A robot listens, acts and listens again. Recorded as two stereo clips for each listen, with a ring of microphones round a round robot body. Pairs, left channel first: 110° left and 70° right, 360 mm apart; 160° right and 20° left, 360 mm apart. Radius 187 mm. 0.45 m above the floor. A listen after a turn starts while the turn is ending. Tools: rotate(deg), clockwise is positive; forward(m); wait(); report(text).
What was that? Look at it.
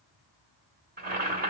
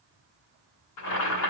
rotate(130)
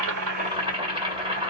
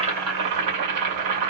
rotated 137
report("Facing the boiling.")